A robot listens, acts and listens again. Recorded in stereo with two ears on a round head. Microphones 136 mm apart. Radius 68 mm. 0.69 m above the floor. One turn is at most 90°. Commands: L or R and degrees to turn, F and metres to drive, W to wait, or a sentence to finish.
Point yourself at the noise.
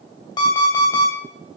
L30
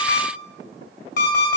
L90
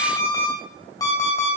L25
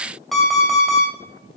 Found it: an alarm clock, straight ahead, 2 to 4 m away.